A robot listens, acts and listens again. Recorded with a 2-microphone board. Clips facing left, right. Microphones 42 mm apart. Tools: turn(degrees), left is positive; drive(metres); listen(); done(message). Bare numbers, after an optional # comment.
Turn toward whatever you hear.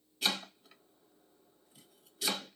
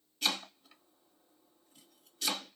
turn(30)
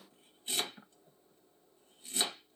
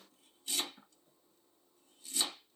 # So it is at 145° left.
turn(145)
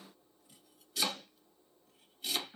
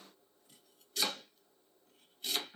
done("Facing the chopping.")